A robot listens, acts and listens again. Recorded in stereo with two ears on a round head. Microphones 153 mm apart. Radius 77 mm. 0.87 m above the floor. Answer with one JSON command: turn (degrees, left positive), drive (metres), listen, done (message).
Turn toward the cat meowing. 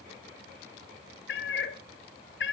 {"turn": 90}
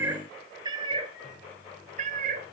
{"turn": -50}
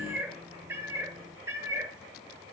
{"turn": -15}
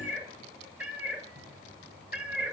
{"turn": -10}
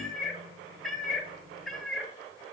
{"done": "Facing the cat meowing, 2 to 4 m away."}